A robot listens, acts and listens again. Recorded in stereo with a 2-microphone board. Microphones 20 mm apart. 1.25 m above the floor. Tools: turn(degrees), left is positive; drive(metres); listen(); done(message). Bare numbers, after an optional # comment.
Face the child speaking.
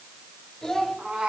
# The child speaking: about 25° left or 155° left.
turn(25)
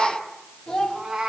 # So it is at 135° left.
turn(135)
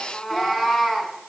listen()
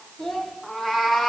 # The child speaking is now 45° left.
turn(45)
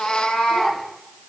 listen()
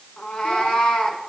listen()
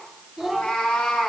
# The child speaking is now 15° right.
turn(-15)
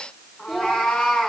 done("Found it: a child speaking, straight ahead.")